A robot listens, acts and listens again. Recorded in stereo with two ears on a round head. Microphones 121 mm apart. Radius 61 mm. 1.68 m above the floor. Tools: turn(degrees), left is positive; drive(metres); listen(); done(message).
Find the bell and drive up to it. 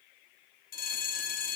turn(degrees=65)
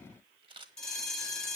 drive(metres=1.0)
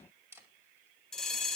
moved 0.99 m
drive(metres=1.0)
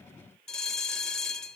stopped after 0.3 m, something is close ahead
done("Arrived at the bell, straight ahead.")